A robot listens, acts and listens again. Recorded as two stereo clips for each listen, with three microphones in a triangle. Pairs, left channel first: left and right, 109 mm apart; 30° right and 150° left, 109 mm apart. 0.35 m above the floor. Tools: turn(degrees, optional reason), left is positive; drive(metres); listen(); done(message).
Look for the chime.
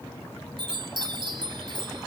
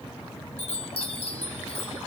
turn(degrees=-45, reason="The chime: 45° right.")
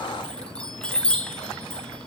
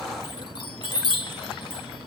turn(degrees=10, reason="The chime is now 10° left.")
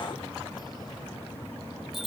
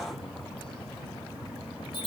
done("Found it: a chime, straight ahead, under 1 m away.")